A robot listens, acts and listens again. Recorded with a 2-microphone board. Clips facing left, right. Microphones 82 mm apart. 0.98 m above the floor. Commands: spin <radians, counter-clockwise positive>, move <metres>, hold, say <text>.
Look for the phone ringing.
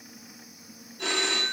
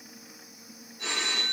spin 1.13
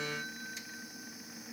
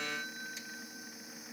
hold
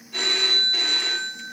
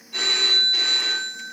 say Found it: a phone ringing, straight ahead, 1 to 2 m away.